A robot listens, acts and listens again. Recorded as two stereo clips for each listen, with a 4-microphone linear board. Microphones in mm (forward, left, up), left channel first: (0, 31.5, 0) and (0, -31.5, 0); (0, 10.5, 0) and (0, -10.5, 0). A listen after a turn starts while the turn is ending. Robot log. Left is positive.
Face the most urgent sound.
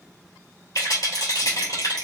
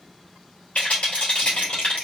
cmd idle
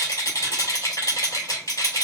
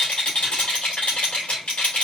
cmd idle
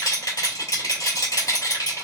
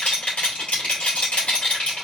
end: I can't make out anything urgent to turn to.